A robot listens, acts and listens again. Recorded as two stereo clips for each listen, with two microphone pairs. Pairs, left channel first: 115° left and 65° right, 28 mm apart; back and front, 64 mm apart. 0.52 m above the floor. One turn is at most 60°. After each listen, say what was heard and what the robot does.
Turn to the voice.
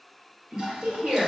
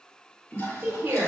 The woman speaking: 50° right. Turn 50° right.
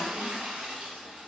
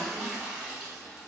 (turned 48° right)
Keep listening.
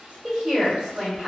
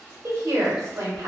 Facing the woman speaking, 1 to 2 m away.